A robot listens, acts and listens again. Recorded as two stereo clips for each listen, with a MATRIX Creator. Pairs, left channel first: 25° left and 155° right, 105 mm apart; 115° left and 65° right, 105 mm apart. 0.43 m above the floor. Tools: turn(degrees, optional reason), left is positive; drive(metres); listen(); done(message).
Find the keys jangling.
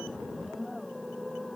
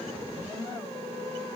listen()
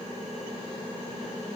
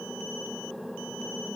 listen()
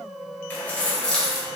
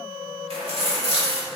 turn(degrees=-65, reason="The keys jangling: 65° right.")
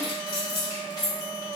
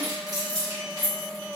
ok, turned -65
turn(degrees=-30, reason="The keys jangling is now 30° right.")
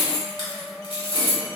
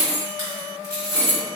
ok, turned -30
turn(degrees=-15, reason="The keys jangling is now 15° right.")
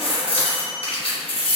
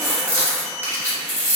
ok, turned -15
done("Found it: keys jangling, straight ahead, 1 to 2 m away.")